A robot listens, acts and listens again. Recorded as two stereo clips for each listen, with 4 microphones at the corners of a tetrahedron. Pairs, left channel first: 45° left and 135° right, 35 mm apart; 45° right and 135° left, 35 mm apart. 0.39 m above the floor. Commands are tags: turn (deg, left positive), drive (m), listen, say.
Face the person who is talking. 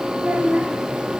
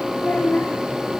<turn deg="-85"/>
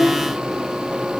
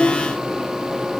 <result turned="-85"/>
<turn deg="-10"/>
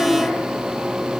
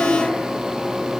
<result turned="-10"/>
<listen/>
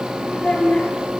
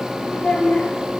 <say>Facing the child speaking, over 4 m away.</say>